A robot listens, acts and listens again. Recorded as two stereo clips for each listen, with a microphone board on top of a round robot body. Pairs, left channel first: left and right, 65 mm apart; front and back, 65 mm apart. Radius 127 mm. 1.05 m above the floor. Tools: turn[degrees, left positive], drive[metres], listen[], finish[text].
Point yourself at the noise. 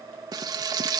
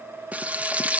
Thought: The frying: 110° right.
Action: turn[-110]
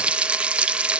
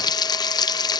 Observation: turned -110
Thought: The frying is now 15° right.
Action: turn[-15]
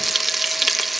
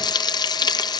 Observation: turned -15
Action: finish[Found it: frying, straight ahead.]